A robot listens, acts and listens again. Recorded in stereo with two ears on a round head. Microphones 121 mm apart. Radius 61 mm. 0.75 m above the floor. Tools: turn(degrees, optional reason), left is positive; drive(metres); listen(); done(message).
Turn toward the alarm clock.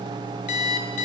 turn(degrees=50, reason="The alarm clock: about 50° left or 130° left.")
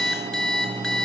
done("Found it: an alarm clock, straight ahead, over 4 m away.")